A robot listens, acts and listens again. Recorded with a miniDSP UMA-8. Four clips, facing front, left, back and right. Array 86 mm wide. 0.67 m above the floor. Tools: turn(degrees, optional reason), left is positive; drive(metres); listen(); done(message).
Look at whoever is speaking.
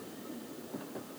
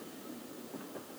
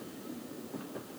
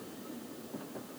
listen()
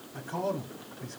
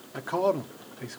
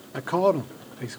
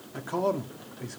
turn(degrees=165, reason="The man speaking: 165° left.")
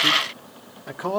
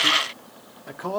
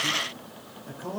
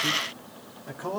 turn(degrees=20, reason="The man speaking is now 20° left.")
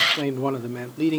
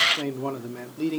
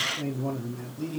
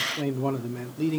done("Found it: a man speaking, straight ahead.")